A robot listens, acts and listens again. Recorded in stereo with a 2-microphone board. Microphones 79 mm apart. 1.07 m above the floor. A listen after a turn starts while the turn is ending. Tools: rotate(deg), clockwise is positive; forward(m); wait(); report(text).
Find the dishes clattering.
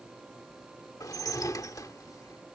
rotate(-50)
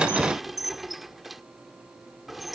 report("Facing the dishes clattering.")